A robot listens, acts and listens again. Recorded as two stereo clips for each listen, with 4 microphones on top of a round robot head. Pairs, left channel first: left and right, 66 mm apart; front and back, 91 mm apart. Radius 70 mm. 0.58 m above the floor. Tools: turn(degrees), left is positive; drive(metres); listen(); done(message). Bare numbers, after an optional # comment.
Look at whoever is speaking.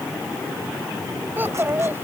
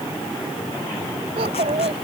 # The child speaking: 150° right.
turn(-150)
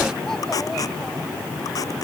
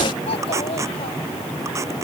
listen()
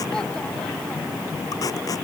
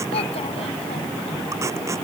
listen()
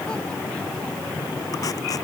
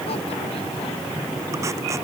done("I heard a child speaking from this way, but can't make it out now.")